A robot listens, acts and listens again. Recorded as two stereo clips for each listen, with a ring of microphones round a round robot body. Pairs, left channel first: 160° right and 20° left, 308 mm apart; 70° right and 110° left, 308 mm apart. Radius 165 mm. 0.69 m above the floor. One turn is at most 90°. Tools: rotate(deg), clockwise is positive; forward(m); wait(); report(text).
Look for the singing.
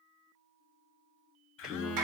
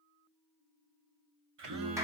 rotate(-90)
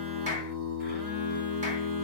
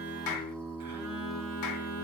report("Facing the singing, 1 to 2 m away.")